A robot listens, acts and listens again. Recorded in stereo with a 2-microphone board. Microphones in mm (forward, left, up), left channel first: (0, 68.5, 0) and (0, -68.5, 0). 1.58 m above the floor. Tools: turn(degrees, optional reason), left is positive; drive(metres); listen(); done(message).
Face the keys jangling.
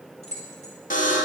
turn(degrees=55, reason="The keys jangling: about 55° left or 125° left.")
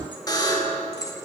turn(degrees=25, reason="So it is at 25° left.")
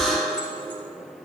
listen()
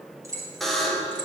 turn(degrees=-25, reason="The keys jangling is now 25° right.")
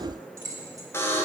turn(degrees=-20, reason="The keys jangling is now 20° right.")
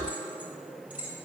turn(degrees=-10, reason="The keys jangling is now 10° right.")
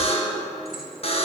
listen()
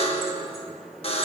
listen()
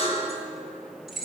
done("Found it: keys jangling, straight ahead, 2 to 4 m away.")